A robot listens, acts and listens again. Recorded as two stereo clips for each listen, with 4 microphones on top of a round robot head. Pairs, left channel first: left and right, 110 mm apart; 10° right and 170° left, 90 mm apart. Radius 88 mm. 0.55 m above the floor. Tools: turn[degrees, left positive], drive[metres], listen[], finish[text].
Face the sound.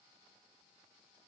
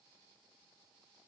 Action: listen[]
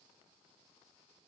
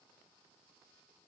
Action: listen[]
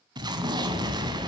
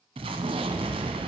Thought: The explosion: 140° right.
Action: turn[-140]
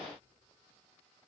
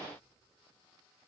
Action: finish[I heard an explosion from this way, but can't make it out now.]